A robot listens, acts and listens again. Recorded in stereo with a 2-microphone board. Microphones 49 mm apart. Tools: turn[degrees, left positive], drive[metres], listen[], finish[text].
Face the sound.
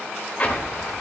Thought: The explosion: about 35° left or 145° left.
Action: turn[35]
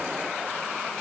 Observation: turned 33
Action: listen[]
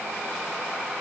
Action: finish[I heard an explosion, but can't make it out now. It was about straight ahead or 115° left.]